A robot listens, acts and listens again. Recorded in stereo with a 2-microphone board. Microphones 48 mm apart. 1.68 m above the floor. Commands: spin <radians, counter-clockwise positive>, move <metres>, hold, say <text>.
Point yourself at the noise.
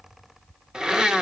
spin -0.26
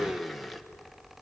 say Found it: a blender, straight ahead, 1 to 2 m away.